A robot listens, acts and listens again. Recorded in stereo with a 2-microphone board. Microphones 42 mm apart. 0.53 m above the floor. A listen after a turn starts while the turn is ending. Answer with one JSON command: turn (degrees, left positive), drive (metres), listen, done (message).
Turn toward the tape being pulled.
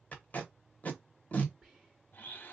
{"turn": 35}
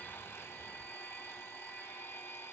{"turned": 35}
{"listen": true}
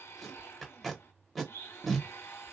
{"done": "Facing the tape being pulled, 1 to 2 m away."}